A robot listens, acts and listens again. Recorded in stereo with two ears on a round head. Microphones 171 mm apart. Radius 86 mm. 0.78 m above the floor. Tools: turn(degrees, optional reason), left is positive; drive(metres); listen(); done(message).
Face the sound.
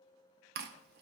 turn(degrees=-55, reason="The chewing: about 55° right or 125° right.")
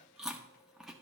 done("Found it: chewing, straight ahead.")